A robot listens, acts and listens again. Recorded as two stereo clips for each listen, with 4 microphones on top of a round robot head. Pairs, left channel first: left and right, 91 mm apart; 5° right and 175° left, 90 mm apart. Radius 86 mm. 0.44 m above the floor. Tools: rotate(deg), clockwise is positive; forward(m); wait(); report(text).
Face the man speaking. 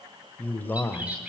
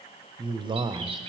rotate(-155)
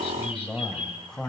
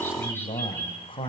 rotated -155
report("Found it: a man speaking, straight ahead, 2 to 4 m away.")